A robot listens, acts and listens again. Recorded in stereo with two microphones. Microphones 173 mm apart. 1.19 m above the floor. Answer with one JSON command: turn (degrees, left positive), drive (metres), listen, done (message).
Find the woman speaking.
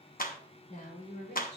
{"turn": 45}
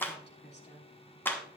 {"turn": 85}
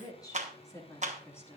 {"turn": 15}
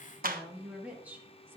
{"turn": -15}
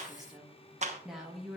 {"done": "Found it: a woman speaking, straight ahead."}